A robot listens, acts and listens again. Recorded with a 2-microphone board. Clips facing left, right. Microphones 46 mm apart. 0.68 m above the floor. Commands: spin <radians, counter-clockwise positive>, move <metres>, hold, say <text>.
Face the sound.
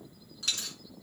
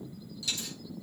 spin 0.87
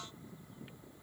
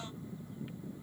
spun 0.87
hold
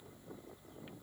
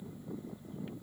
say I heard a dropped coin, but can't make it out now. It was about straight ahead or 80° left.